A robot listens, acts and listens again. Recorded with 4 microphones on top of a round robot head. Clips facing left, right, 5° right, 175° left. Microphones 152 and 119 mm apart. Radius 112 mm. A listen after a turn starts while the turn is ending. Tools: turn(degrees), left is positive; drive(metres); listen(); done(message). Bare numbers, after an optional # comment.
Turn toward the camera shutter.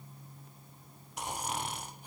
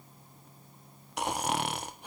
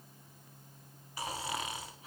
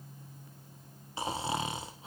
listen()
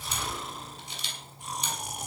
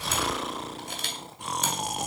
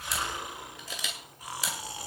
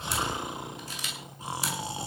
# The camera shutter: 35° right.
turn(-35)
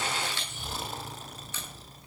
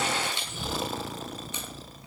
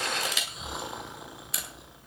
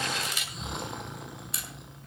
# The camera shutter is now 15° right.
turn(-15)
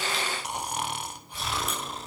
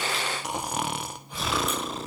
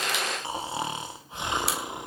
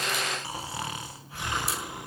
listen()
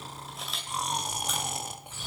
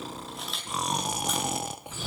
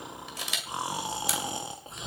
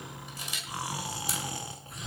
done("Facing the camera shutter, 2 to 4 m away.")